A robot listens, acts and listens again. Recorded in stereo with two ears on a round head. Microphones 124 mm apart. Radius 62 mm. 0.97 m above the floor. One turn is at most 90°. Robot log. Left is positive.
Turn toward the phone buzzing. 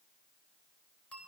cmd idle
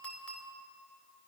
cmd idle
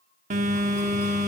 note: The phone buzzing: about 55° right or 125° right.
cmd yaw -55
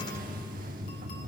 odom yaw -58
note: So it is at 65° right.
cmd yaw -65
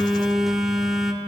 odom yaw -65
end: Found it: a phone buzzing, straight ahead, 1 to 2 m away.